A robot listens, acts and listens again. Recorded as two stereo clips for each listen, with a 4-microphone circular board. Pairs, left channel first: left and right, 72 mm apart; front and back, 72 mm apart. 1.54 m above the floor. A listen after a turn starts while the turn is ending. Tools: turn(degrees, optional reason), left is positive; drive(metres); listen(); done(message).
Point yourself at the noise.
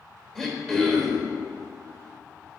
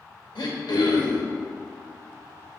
done("Facing the throat clearing, 1 to 2 m away.")